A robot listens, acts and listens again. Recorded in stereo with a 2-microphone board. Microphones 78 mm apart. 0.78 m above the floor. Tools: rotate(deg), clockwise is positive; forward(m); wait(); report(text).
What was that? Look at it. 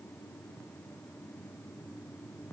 wait()
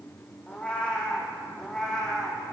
rotate(-30)
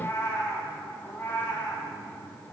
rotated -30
rotate(-155)
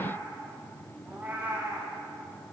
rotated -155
rotate(25)
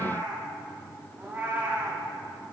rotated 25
rotate(20)
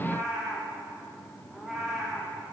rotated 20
rotate(10)
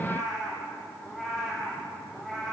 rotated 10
report("Facing the cat meowing, over 4 m away.")